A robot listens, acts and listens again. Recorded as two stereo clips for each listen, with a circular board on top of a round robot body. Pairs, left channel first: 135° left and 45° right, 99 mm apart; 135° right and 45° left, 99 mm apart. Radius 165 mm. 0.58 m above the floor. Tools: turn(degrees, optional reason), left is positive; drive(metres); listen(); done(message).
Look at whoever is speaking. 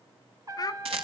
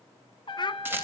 turn(degrees=-175, reason="The child speaking: 175° right.")
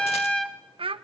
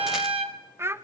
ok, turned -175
turn(degrees=-20, reason="The child speaking is now 20° right.")
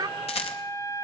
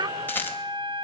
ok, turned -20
done("Facing the child speaking, 1 to 2 m away.")